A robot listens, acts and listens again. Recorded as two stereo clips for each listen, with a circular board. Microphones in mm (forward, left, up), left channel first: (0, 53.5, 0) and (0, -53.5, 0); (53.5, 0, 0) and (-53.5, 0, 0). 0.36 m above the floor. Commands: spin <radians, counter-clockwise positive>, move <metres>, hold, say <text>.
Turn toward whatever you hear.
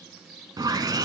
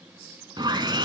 spin -2.36
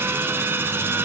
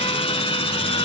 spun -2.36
spin -0.35
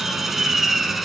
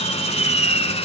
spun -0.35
say Found it: sawing, straight ahead.